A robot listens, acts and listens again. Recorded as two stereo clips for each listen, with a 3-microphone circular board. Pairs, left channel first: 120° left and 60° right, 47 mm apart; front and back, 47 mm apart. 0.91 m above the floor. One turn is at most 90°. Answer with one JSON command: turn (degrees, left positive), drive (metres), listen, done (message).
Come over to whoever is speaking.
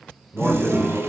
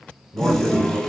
{"turn": -90}
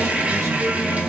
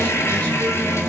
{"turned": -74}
{"turn": -60}
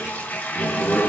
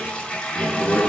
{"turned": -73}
{"turn": 10}
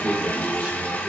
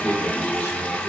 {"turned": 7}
{"drive": 1.0}
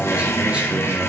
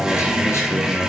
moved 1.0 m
{"drive": 1.0}
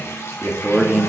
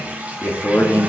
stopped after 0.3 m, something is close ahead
{"turn": 10}
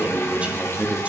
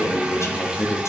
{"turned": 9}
{"done": "Arrived at the man speaking, straight ahead."}